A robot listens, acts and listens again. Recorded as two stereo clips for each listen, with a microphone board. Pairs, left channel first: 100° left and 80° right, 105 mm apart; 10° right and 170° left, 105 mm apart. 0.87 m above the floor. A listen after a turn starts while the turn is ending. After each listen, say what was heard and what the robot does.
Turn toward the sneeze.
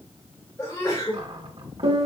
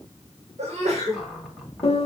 The sneeze: 165° left. Turn 165° left.
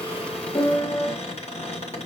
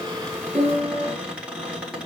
I heard a sneeze from this way, but can't make it out now.